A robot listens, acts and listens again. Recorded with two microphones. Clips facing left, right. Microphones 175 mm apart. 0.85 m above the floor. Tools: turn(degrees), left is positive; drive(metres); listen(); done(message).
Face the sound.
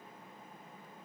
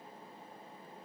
listen()
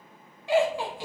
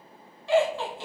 turn(degrees=30)
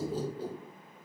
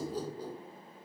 turn(degrees=25)
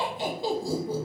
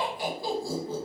turn(degrees=30)
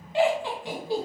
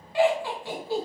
turn(degrees=15)
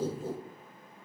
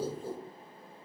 turn(degrees=20)
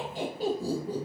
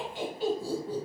turn(degrees=145)
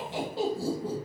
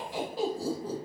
turn(degrees=25)
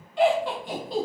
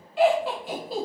done("Found it: laughter, straight ahead, 1 to 2 m away.")